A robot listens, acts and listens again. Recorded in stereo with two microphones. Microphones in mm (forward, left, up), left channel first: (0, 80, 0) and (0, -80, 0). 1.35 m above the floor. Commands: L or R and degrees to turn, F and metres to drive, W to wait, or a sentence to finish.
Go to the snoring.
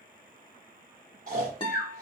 R55
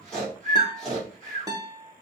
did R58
F1.0
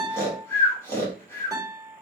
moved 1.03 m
L15
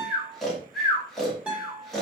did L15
F1.0
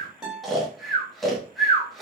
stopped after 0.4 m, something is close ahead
I am next to the snoring.